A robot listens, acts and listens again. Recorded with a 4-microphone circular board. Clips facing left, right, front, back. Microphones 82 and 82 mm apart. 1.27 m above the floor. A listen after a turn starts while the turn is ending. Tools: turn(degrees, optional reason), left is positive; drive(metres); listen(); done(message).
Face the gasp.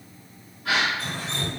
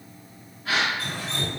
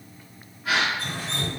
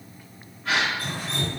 turn(degrees=85, reason="The gasp: 85° left.")
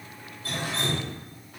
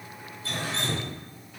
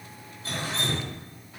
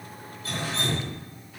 done("I heard a gasp from this way, but can't make it out now.")